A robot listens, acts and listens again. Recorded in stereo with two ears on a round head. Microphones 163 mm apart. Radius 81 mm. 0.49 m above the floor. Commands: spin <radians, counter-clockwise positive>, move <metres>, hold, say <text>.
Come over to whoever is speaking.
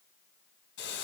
hold
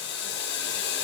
hold
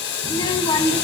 spin 0.44
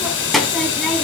move 1.0
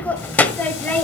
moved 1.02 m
spin 0.17
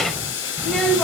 move 1.0
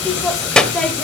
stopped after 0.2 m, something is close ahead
say Arrived at the child speaking, straight ahead.